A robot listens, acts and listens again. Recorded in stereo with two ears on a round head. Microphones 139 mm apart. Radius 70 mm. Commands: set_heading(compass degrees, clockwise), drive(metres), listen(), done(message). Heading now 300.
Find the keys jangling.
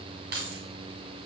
set_heading(10)
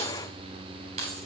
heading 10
set_heading(50)
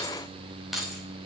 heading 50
done("Facing the keys jangling, over 4 m away.")